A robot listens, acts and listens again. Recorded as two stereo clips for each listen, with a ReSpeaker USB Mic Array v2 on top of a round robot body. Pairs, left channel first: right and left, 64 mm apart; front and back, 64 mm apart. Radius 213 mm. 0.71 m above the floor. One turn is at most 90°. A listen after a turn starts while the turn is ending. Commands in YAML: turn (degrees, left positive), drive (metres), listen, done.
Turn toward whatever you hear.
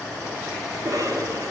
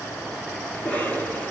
turn: 65
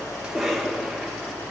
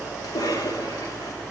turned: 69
done: "Found it: a cough, straight ahead."